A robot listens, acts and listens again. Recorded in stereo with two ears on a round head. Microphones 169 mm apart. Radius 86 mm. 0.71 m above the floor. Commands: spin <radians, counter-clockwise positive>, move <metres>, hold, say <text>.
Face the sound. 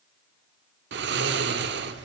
spin -1.13
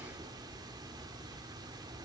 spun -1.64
spin -0.35
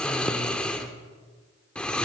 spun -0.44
say Facing the snoring.